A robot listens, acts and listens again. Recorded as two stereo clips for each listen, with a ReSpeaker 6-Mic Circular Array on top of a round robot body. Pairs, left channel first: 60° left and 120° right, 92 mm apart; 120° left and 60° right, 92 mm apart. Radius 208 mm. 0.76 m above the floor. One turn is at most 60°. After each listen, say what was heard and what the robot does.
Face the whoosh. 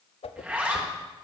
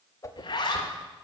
The whoosh: 60° left. Turn 60° left.
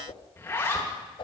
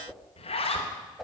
The whoosh is now 25° left. Turn 25° left.
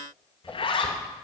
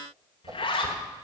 The whoosh is now 10° right. Turn 10° right.
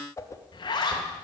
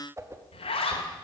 Facing the whoosh, under 1 m away.